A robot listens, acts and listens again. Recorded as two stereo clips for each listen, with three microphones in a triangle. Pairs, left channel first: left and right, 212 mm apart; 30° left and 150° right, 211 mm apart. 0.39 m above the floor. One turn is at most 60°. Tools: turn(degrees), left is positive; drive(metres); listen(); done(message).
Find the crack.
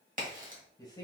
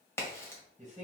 turn(degrees=-50)
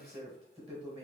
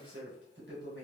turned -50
done("Facing where the crack came from. I can't hear it now.")